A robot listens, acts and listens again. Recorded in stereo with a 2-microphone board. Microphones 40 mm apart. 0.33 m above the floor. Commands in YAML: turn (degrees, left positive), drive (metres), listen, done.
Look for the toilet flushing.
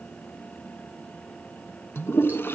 turn: 70
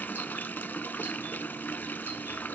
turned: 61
turn: 50
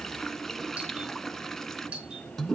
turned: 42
turn: 10
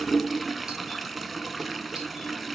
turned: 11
done: "Found it: a toilet flushing, straight ahead, under 1 m away."